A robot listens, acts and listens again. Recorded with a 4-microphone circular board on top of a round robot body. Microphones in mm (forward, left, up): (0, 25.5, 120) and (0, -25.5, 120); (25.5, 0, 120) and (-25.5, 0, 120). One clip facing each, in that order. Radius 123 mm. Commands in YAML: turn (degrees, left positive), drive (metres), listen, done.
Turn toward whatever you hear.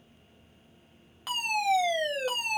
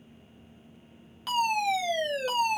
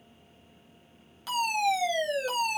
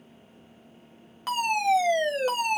turn: 165
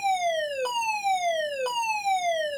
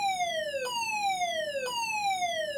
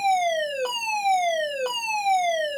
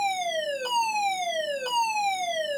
turn: 50
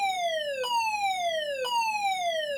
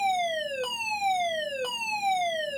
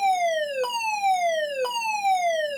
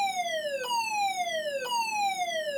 done: "Found it: a fire alarm, straight ahead, 2 to 4 m away."